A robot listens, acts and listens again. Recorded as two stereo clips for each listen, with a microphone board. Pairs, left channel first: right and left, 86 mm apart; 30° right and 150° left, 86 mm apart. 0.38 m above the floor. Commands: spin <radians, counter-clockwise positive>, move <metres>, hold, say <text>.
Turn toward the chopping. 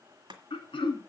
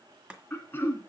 spin 1.31
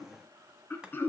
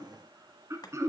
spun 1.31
spin 0.17
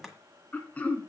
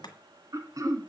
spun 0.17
say Found it: chopping, straight ahead, 1 to 2 m away.